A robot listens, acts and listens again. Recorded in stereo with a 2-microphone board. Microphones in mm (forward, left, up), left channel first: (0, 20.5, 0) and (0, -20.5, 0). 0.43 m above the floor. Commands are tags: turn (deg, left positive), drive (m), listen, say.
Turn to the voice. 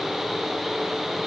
<listen/>
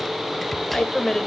<turn deg="30"/>
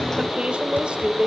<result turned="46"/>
<turn deg="-30"/>
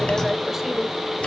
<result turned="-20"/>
<turn deg="-10"/>
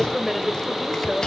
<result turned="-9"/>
<say>Facing the woman speaking, 1 to 2 m away.</say>